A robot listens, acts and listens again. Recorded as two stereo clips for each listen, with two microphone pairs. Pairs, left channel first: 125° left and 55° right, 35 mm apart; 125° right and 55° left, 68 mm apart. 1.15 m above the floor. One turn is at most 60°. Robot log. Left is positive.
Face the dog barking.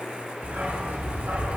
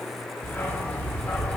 note: The dog barking: 55° right.
cmd yaw -55
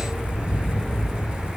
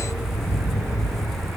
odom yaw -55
note: The dog barking is now 15° left.
cmd yaw +15
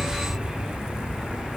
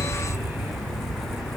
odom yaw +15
note: The dog barking is now 15° left.
cmd yaw +15
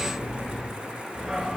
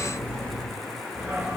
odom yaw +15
note: The dog barking is now 10° left.
cmd yaw +10
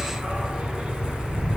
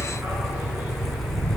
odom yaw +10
end: Found it: a dog barking, straight ahead, 2 to 4 m away.